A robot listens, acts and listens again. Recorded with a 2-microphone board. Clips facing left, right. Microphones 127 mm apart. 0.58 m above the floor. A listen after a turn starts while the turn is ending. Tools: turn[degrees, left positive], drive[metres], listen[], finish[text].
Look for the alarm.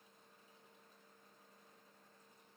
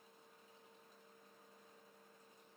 Action: listen[]
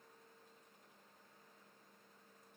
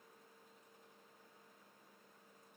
Action: listen[]
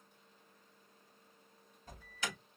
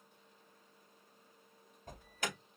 Thought: The alarm: about 55° right or 125° right.
Action: turn[-55]
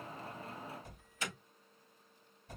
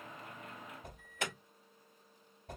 Thought: So it is at 70° right.
Action: turn[-70]
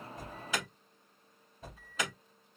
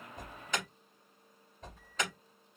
Action: finish[Found it: an alarm, straight ahead.]